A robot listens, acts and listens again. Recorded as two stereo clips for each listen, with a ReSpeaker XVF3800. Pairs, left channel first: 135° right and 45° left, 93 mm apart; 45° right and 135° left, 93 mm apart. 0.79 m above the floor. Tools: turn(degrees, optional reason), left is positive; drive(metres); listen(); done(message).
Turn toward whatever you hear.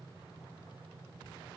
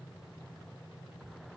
listen()
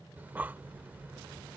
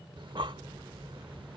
turn(degrees=115, reason="The breathing: 115° left.")
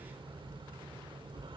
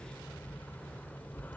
turn(degrees=25, reason="The breathing is now 25° left.")
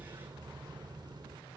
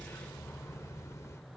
turn(degrees=10, reason="The breathing is now 10° left.")
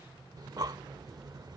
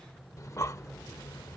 done("Found it: breathing, straight ahead.")